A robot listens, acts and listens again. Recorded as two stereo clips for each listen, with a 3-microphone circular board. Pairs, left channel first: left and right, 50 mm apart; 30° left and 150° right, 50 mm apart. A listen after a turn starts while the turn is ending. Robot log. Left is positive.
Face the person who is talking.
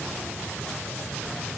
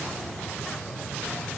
cmd idle
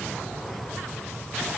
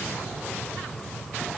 cmd idle
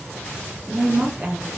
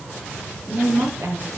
note: The woman speaking: 145° right.
cmd yaw -145
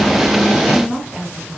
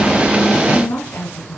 note: The woman speaking is now 10° right.
cmd yaw -10
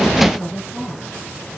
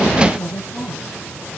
end: Facing the woman speaking, over 4 m away.